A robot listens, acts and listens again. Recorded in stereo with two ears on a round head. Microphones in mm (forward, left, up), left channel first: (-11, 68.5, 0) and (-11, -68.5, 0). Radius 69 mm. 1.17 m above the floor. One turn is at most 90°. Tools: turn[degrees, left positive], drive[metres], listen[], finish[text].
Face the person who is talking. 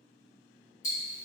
Action: listen[]
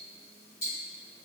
Action: listen[]
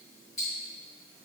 Action: finish[I can't make out anyone speaking, only ticking.]